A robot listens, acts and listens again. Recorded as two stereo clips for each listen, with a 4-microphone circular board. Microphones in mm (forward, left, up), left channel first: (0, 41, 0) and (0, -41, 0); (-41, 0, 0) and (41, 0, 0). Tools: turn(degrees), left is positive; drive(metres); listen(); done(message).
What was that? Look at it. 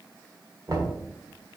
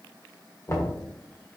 turn(degrees=-130)
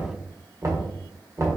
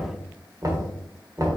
turn(degrees=-45)
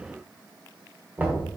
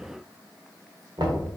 turn(degrees=-25)
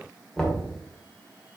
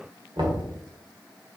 done("Facing the knocking.")